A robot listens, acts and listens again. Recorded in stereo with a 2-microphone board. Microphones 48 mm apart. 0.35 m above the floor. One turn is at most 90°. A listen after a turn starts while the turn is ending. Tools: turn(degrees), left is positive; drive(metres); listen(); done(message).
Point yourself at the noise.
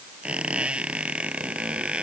turn(degrees=-25)
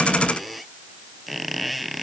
done("Found it: a squeak, straight ahead.")